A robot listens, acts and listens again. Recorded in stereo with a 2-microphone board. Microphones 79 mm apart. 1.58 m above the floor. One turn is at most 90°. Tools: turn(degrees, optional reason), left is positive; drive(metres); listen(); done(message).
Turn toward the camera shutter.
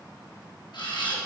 turn(degrees=70, reason="The camera shutter: about 70° left or 110° left.")
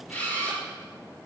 turn(degrees=25, reason="So it is at 25° left.")
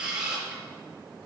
turn(degrees=-10, reason="The camera shutter is now 10° right.")
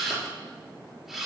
done("Found it: a camera shutter, straight ahead.")